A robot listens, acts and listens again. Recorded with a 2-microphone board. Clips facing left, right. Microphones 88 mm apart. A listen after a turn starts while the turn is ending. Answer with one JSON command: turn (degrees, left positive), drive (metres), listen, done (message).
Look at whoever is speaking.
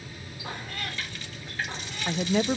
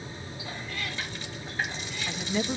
{"turn": 55}
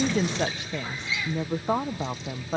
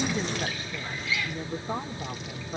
{"turn": 75}
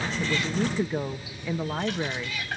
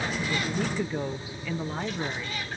{"turn": 15}
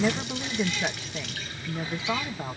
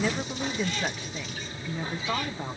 {"done": "Facing the woman speaking, 1 to 2 m away."}